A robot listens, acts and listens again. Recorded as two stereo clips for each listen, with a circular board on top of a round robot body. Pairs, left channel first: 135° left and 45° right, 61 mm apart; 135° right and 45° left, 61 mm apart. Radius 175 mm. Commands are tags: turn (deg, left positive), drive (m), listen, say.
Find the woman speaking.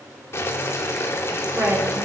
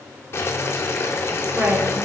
<say>Found it: a woman speaking, straight ahead, 2 to 4 m away.</say>